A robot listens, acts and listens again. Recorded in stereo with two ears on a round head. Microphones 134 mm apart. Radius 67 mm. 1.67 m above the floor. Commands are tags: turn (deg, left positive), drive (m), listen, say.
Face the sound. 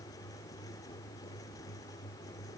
<listen/>
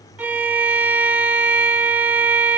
<turn deg="-30"/>
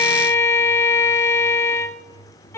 <turn deg="15"/>
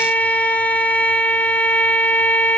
<turn deg="10"/>
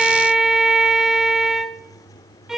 <say>Found it: a violin, straight ahead.</say>